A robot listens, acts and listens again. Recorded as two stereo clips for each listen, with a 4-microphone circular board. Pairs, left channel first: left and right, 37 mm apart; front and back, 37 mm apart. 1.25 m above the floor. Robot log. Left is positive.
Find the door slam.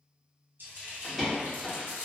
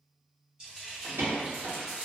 note: The door slam: straight behind.
cmd yaw +180
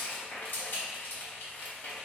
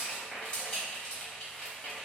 end: I heard a door slam from this way, but can't make it out now.